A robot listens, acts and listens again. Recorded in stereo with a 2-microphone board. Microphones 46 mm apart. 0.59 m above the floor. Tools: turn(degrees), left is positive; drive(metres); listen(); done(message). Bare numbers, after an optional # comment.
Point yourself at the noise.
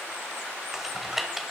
turn(-30)
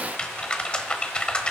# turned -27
# So it is at 20° left.
turn(20)
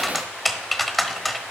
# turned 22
done("Found it: typing on a keyboard, straight ahead.")